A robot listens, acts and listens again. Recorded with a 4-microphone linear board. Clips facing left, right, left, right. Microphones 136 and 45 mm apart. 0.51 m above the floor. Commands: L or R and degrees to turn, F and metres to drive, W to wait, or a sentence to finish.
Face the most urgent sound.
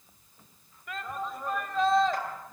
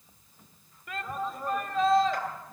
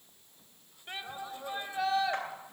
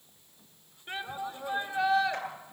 L30
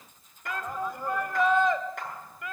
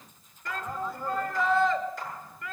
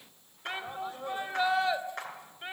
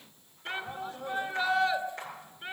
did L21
L160
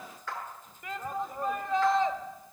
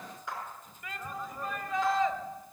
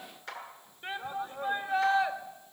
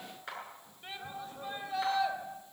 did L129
L35
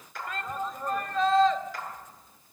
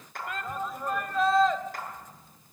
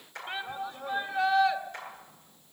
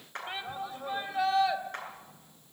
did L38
Facing the shout, 2 to 4 m away.